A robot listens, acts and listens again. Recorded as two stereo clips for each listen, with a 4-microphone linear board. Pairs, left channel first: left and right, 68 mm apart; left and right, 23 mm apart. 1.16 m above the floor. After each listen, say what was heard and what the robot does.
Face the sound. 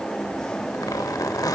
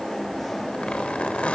The zipper: about 60° left or 120° left. Turn 60° left.
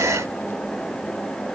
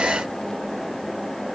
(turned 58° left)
Keep listening.
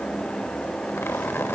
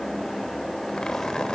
So it is at 40° left. Turn 40° left.
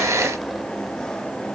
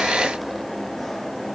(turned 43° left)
Keep listening.
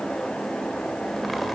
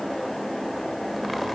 Keep listening.
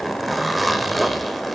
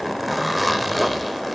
Found it: a zipper, straight ahead, 1 to 2 m away.